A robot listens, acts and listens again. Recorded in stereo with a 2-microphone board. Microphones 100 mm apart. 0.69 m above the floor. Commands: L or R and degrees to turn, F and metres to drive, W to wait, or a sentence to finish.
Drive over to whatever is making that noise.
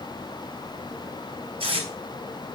R70
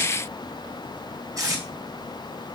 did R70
R35
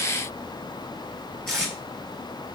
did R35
F1.0
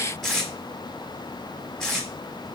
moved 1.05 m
F1.0
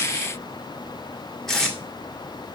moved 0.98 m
F1.0
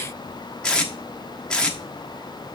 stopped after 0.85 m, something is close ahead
L10
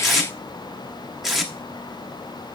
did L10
Arrived at the tape being pulled, straight ahead.